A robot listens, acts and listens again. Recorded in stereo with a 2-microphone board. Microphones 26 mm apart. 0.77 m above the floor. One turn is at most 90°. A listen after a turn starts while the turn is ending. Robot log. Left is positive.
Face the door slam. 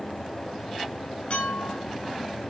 cmd idle
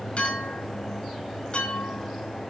cmd idle
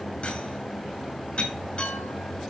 end: I can't make out a door slam to turn to.